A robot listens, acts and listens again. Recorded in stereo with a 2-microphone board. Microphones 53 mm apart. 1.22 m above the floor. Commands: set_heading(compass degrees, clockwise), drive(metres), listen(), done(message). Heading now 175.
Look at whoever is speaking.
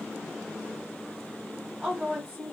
set_heading(145)
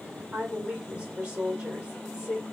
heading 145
set_heading(170)
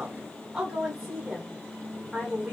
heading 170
set_heading(180)
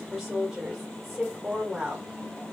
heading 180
done("Facing the woman speaking, 1 to 2 m away.")